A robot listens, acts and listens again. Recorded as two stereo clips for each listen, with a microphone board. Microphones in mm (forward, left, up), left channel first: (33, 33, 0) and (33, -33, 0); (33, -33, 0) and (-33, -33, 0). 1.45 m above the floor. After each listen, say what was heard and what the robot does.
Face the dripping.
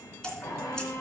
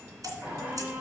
The dripping: 170° left. Turn 170° left.
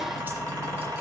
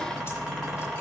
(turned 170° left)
Keep listening.
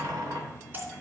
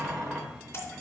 The dripping is now 40° right. Turn 40° right.
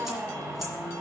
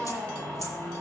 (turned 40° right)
Keep listening.
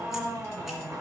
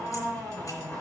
Keep listening.
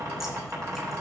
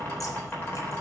Facing where the dripping came from. I can't hear it now.